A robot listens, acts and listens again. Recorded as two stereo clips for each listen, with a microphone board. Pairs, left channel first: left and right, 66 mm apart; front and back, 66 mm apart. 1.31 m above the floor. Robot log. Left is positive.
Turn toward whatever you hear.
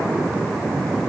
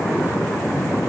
cmd idle
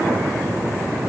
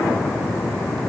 cmd idle
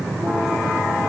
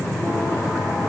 end: I can't make out anything.